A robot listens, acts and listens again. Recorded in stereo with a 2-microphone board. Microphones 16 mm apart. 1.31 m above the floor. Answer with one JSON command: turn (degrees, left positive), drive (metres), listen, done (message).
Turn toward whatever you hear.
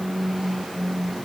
{"listen": true}
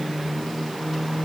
{"listen": true}
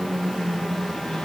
{"done": "I can't make out anything."}